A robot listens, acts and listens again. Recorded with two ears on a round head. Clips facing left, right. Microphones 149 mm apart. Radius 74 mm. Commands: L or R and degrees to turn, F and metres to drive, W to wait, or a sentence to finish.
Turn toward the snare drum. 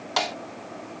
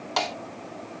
L30
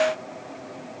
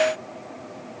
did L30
L150
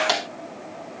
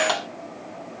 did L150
L20
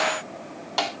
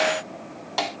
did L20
Found it: a snare drum, straight ahead.